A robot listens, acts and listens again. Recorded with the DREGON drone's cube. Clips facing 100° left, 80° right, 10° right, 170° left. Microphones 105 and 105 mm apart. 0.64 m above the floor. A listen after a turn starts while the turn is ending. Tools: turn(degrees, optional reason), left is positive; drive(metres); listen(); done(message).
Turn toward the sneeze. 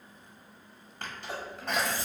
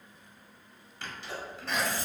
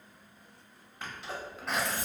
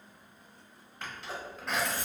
turn(degrees=75, reason="The sneeze: 75° left.")
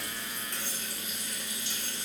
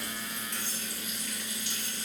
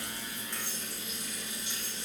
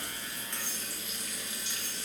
done("I heard a sneeze from this way, but can't make it out now.")